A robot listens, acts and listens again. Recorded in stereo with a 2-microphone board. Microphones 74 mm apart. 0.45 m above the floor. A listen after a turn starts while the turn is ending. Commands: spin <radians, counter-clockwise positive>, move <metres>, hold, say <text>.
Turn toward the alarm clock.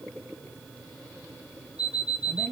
spin 1.57
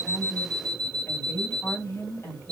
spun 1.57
spin 0.17
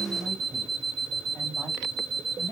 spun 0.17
say Found it: an alarm clock, straight ahead, 1 to 2 m away.